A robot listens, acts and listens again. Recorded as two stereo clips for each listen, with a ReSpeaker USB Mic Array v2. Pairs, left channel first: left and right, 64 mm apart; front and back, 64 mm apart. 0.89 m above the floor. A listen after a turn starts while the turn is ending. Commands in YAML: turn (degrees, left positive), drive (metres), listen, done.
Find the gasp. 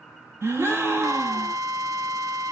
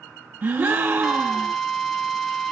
turn: -130
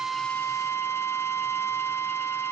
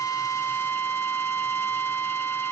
done: "Facing where the gasp came from. I can't hear it now."